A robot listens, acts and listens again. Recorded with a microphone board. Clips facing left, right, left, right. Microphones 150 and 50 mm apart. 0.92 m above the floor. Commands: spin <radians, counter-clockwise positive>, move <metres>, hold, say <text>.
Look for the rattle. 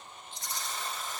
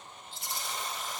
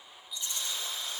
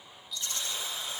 spin 0.35
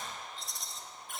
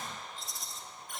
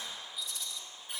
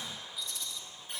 say Found it: a rattle, straight ahead.